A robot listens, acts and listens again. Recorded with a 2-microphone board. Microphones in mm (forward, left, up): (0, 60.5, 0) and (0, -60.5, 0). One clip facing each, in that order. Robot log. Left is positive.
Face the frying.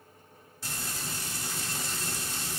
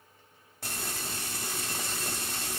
note: The frying: about 55° right or 125° right.
cmd yaw -55
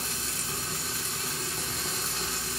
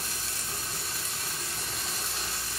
end: Found it: frying, straight ahead, 1 to 2 m away.